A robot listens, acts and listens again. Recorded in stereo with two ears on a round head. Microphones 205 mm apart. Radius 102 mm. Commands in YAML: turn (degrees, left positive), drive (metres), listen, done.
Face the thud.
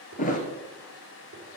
turn: 35
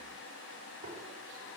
listen: true
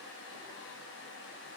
done: "I heard a thud, but can't make it out now. It was about straight ahead or 110° left."